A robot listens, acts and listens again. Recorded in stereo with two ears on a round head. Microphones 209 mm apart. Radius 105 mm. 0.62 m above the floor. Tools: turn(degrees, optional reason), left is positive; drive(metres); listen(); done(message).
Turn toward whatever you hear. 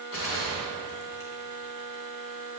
turn(degrees=65, reason="The gunshot: about 65° left or 115° left.")
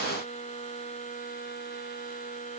listen()
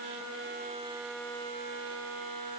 done("I heard a gunshot, but can't make it out now. It was about straight ahead or 50° left.")